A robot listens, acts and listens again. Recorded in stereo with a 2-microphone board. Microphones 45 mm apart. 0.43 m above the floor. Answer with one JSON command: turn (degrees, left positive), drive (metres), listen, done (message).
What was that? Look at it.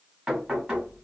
{"turn": -15}
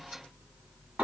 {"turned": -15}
{"turn": -150}
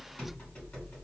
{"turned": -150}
{"turn": 30}
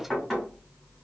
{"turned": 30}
{"done": "Facing the knocking."}